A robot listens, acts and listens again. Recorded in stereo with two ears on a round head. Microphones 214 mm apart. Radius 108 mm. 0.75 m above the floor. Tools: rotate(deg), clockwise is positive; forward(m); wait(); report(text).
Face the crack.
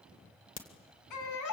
rotate(-40)
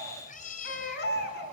wait()
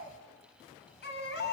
report("I heard a crack, but can't make it out now. It was about straight ahead or 100° left.")